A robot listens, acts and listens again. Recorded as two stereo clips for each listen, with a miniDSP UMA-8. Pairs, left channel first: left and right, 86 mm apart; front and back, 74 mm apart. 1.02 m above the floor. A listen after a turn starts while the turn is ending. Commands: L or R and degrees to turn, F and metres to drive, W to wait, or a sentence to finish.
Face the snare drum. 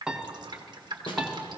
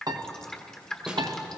L100
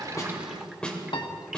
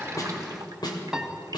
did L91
L10
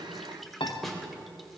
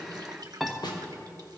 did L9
Found it: a snare drum, straight ahead, 2 to 4 m away.